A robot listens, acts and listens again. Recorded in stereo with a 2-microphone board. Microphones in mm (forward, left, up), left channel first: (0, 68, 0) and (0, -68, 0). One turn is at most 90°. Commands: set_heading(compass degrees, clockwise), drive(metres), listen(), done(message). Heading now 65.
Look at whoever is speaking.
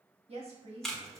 set_heading(110)
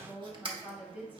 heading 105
set_heading(115)
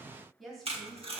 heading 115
done("Facing the woman speaking.")